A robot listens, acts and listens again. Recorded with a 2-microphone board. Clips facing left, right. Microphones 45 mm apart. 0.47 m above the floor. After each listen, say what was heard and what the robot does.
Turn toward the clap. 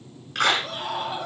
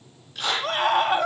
The clap: about 70° left or 110° left. Turn 70° left.
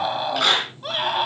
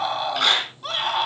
Facing the clap, over 4 m away.